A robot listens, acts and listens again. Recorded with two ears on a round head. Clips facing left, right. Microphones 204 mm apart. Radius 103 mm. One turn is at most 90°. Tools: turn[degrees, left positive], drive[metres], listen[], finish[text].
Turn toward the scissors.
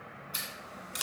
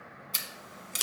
Thought: The scissors: about 35° right or 145° right.
Action: turn[-35]
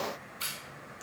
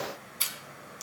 Thought: So it is at 110° right.
Action: turn[-90]
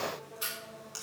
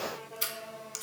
Thought: The scissors is now 35° right.
Action: turn[-35]
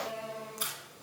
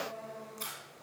Thought: The scissors is now 15° left.
Action: turn[15]
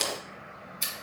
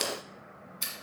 Action: finish[Facing the scissors.]